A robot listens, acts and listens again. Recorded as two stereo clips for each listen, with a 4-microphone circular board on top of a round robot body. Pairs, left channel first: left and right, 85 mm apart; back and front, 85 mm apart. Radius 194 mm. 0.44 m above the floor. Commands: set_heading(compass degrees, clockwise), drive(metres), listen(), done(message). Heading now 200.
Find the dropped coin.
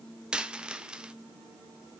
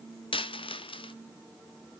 set_heading(10)
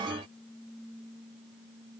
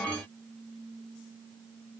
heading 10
done("Facing where the dropped coin came from. I can't hear it now.")